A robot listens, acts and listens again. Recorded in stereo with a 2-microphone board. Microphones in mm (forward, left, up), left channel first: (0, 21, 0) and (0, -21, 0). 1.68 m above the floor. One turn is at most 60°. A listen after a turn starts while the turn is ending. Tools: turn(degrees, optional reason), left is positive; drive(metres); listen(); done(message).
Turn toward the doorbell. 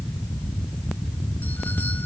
listen()
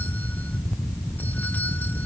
listen()
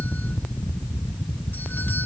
done("I can't make out a doorbell.")